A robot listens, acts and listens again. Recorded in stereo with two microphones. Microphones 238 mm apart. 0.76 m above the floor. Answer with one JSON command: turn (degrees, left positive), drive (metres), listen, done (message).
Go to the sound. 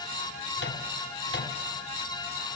{"turn": 50}
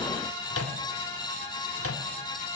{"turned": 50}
{"turn": 80}
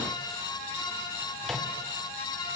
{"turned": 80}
{"listen": true}
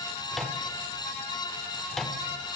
{"drive": 1.0}
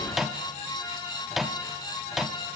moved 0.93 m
{"drive": 1.0}
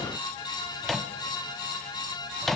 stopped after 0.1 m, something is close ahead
{"done": "I am next to the microwave."}